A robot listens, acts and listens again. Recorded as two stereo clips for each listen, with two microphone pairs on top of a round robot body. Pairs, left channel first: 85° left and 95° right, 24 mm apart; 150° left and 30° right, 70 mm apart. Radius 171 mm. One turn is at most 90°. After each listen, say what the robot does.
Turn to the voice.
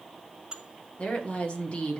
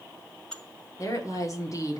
Turn 90° left.
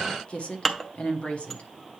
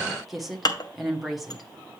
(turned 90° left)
Turn 55° left.
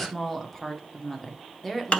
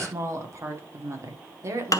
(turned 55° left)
Turn 10° left.
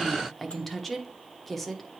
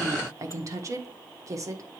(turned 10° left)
Found it: a woman speaking, straight ahead, 1 to 2 m away.